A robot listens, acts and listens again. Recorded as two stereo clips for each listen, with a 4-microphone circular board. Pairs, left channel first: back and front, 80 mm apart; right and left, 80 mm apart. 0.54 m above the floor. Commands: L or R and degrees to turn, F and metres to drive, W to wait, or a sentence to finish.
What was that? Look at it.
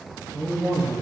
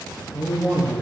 Found it: a man speaking, straight ahead, 1 to 2 m away.